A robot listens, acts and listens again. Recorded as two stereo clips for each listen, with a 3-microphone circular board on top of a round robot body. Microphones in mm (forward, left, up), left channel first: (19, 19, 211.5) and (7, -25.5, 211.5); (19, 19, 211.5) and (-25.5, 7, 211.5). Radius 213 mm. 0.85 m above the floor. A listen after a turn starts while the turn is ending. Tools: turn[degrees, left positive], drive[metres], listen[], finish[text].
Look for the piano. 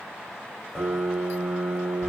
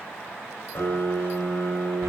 Thought: The piano: 10° right.
Action: turn[-10]
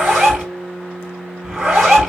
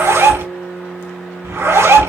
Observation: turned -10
Action: finish[Found it: a piano, straight ahead.]